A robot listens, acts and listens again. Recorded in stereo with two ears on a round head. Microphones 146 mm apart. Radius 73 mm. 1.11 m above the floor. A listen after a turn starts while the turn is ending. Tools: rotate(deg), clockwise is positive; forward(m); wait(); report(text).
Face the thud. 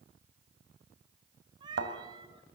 rotate(90)
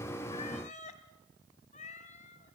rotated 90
report("I heard a thud from this way, but can't make it out now.")